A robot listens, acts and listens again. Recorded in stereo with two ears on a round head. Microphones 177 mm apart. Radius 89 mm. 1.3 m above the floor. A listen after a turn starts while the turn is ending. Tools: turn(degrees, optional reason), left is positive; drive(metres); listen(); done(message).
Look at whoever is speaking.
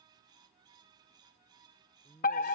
turn(degrees=30)
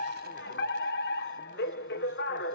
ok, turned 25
listen()
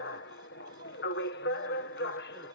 listen()
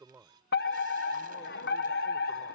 turn(degrees=-10, reason="So it is at 10° right.")
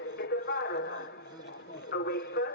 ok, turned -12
listen()
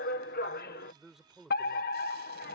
done("Facing the man speaking.")